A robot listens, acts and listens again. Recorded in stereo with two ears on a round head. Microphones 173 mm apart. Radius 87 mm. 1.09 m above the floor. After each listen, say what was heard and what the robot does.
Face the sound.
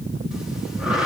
Turn 30° right.
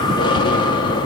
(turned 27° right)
So it is at 25° left. Turn 25° left.
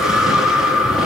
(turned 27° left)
Facing the breathing, 1 to 2 m away.